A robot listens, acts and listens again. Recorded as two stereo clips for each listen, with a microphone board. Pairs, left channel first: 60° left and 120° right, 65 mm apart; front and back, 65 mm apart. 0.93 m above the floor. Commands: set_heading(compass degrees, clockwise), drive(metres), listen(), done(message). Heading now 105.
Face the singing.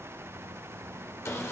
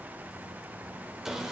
listen()
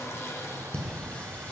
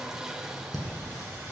done("Facing the singing.")